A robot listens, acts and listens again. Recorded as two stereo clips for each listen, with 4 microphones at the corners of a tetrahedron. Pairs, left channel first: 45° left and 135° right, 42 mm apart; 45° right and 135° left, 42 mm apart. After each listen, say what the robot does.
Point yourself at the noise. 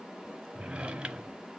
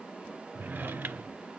Turn 165° left.
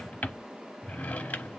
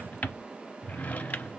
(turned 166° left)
Found it: a drawer, straight ahead.